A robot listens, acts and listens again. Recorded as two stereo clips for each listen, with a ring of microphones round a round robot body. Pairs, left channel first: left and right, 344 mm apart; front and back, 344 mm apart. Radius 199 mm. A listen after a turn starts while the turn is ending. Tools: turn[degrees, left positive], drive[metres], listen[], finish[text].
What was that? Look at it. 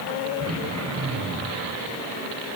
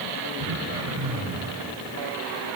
Thought: The throat clearing: 135° right.
Action: turn[-135]
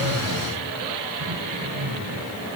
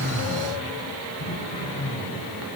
Thought: The throat clearing is now 20° right.
Action: turn[-20]
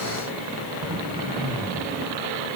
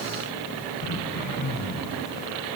Thought: The throat clearing is now 10° right.
Action: turn[-10]
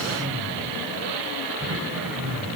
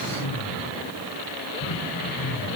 Action: finish[Facing the throat clearing, 2 to 4 m away.]